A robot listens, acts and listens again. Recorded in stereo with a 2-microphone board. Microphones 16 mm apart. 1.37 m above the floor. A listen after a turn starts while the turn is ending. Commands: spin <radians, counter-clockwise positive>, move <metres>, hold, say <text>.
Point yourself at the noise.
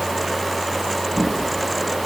spin 0.52
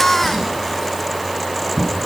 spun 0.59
spin -0.61
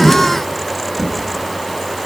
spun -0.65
say Found it: a drawer, straight ahead, over 4 m away.